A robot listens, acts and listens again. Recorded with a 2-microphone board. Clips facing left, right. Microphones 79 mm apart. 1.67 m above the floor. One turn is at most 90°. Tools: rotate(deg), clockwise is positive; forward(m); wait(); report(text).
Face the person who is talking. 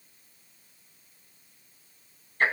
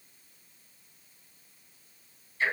wait()
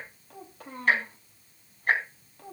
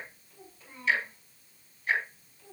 rotate(-70)
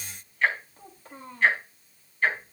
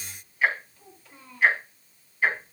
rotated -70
rotate(-40)
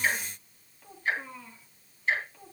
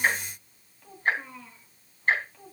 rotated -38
report("Facing the child speaking, 2 to 4 m away.")